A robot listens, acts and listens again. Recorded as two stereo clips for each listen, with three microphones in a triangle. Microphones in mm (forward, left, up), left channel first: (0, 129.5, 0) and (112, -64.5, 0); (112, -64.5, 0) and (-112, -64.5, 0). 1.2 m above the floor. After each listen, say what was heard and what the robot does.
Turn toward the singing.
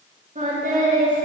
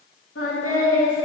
Found it: singing, straight ahead.